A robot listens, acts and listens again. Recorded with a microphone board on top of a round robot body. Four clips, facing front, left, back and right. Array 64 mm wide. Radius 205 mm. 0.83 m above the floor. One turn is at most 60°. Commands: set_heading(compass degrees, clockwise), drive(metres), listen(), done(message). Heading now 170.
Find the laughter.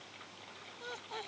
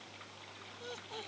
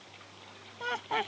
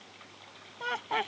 set_heading(230)
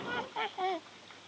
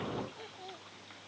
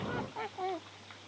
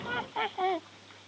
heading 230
set_heading(290)
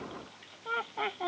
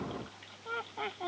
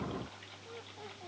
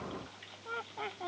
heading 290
done("Facing the laughter.")